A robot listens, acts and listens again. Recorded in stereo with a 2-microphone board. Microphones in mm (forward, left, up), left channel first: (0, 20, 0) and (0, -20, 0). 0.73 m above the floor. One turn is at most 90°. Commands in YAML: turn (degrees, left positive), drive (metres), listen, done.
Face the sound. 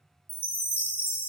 turn: 60
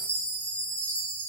turn: 40
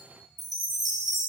done: "Found it: a chime, straight ahead, under 1 m away."